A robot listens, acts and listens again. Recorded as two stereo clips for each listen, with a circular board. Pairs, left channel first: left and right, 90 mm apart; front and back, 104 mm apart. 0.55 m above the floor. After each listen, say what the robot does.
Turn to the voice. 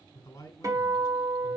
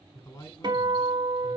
Turn 40° left.
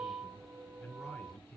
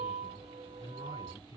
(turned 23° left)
Turn 15° left.
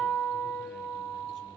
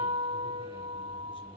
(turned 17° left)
Keep listening.
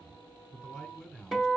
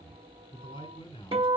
Found it: a man speaking, straight ahead, 1 to 2 m away.